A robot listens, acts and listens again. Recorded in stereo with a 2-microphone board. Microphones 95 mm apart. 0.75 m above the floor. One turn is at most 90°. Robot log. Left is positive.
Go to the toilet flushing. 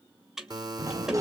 cmd yaw -30
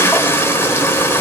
note: So it is at 25° left.
cmd yaw +25
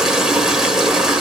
cmd fwd 1.0
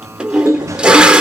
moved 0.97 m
note: The toilet flushing is now 10° right.
cmd yaw -10
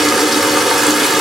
cmd fwd 1.0
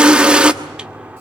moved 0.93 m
note: The toilet flushing is now 10° right.
cmd yaw -10
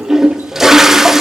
cmd fwd 1.0
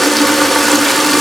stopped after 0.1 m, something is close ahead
end: Arrived at the toilet flushing, straight ahead.